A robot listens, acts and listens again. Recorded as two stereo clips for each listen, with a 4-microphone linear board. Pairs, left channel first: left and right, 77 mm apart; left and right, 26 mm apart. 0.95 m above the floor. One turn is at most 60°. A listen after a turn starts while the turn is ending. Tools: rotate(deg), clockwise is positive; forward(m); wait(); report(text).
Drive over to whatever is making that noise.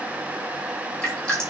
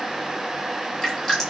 rotate(-30)
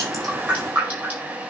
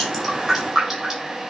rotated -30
rotate(20)
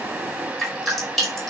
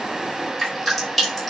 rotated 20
forward(1.0)
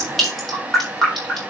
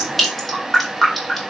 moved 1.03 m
forward(1.0)
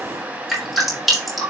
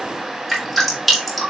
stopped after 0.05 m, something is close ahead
report("Blocked. The dripping is further on, straight ahead.")